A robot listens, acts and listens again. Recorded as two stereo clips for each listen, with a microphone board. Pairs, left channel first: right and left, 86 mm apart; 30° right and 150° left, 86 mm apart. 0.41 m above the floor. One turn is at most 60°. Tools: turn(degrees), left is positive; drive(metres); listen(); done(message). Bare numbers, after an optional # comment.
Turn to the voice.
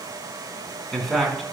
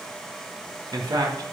# The man speaking: straight behind.
turn(60)
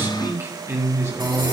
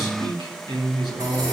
# The man speaking is now 140° left.
turn(60)
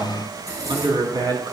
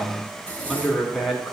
# The man speaking is now 60° left.
turn(60)
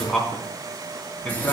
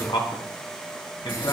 # The man speaking is now 20° right.
turn(-20)
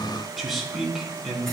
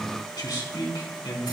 done("Found it: a man speaking, straight ahead, 2 to 4 m away.")